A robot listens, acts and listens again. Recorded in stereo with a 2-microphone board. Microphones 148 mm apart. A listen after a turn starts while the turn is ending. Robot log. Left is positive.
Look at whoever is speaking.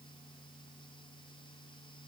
cmd idle
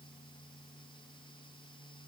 cmd idle
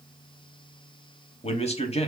note: The man speaking: about 40° left or 140° left.
cmd yaw +40
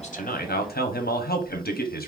note: So it is at 100° left.
cmd yaw +100
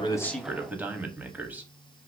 note: The man speaking is now 10° right.
cmd yaw -10
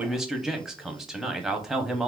end: Found it: a man speaking, straight ahead.